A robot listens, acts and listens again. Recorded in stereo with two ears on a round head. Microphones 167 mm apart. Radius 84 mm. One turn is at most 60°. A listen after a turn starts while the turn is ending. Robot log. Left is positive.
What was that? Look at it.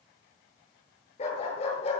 note: The dog barking: about 35° left or 145° left.
cmd yaw +35
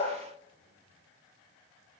cmd idle
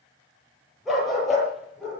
end: Facing the dog barking, over 4 m away.